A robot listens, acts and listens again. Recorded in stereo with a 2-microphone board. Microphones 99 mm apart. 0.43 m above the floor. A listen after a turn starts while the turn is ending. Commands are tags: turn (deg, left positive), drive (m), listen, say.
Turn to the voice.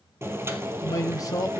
<turn deg="35"/>
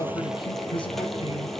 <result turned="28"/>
<turn deg="110"/>
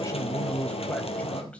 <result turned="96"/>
<turn deg="15"/>
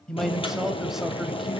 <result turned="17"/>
<say>Facing the man speaking.</say>